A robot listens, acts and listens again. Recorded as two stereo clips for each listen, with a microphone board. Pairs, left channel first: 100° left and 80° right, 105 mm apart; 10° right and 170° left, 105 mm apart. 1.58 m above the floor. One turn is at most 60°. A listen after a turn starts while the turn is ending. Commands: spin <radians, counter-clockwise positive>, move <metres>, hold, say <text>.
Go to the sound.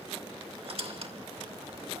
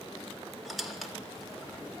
spin -1.05
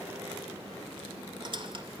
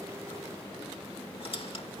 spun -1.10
spin -0.70
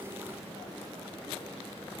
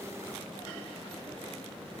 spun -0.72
hold
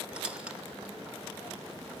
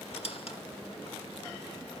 move 1.0
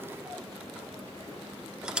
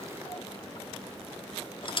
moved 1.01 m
move 1.0
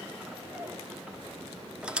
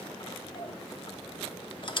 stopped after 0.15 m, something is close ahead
say I am next to the squeak.